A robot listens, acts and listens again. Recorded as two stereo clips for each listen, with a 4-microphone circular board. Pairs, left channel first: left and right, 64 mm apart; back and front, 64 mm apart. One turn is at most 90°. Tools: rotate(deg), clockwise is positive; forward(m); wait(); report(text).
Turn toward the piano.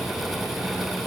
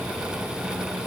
wait()
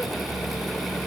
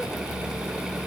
wait()
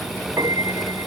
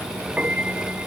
rotate(70)
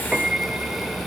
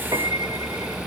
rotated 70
rotate(15)
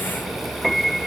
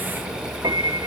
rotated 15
report("Found it: a piano, straight ahead.")